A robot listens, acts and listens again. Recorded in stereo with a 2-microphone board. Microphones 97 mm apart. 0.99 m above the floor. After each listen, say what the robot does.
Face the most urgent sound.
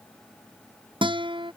Keep listening.
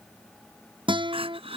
Turn 70° right.
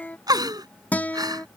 Turn 40° right.
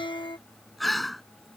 Facing the crying.